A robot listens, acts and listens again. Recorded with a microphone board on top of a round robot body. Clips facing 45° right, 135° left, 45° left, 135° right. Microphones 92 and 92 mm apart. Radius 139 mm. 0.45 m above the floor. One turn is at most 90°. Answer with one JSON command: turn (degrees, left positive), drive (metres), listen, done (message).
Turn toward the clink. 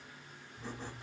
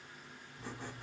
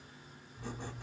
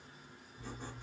{"listen": true}
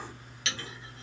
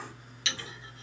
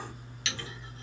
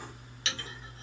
{"turn": -90}
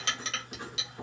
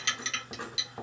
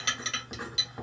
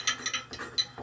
{"done": "Facing the clink."}